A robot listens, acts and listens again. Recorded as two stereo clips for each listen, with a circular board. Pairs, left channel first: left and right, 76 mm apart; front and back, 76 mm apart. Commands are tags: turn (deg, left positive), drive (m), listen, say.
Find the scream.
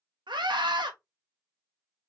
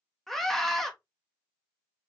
<turn deg="-85"/>
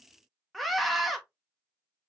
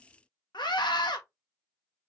<say>Facing the scream.</say>